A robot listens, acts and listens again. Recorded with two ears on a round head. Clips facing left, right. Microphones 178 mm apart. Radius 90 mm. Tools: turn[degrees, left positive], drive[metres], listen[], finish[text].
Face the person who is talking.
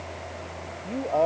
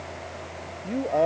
Action: turn[-30]
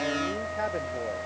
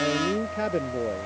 Action: listen[]
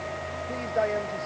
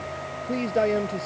Thought: So it is at 135° right.
Action: turn[-135]
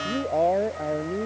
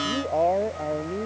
Action: finish[Facing the man speaking.]